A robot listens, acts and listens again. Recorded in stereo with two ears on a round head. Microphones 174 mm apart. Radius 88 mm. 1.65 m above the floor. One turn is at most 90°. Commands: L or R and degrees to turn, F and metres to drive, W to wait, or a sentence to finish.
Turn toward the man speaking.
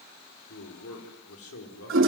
L90
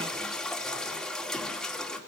W
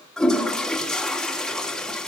W
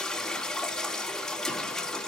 I heard a man speaking from this way, but can't make it out now.